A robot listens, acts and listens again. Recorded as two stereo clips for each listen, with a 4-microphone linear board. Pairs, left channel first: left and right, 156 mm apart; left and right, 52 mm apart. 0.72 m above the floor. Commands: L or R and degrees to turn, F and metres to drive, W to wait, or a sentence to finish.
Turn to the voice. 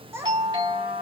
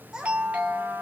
R15
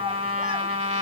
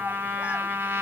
W
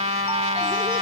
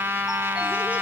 W
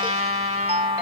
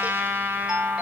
I heard a child speaking, but can't make it out now. It was about straight ahead or 150° right.